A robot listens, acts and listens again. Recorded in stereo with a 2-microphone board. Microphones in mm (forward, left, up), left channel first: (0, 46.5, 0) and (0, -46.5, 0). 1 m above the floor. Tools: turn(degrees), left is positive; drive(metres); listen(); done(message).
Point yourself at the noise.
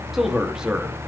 turn(degrees=-30)
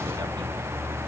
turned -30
listen()
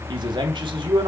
turn(degrees=-125)
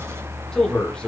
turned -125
turn(degrees=10)
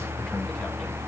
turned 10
listen()
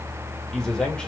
turn(degrees=10)
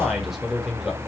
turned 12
done("Found it: a man speaking, straight ahead, 2 to 4 m away.")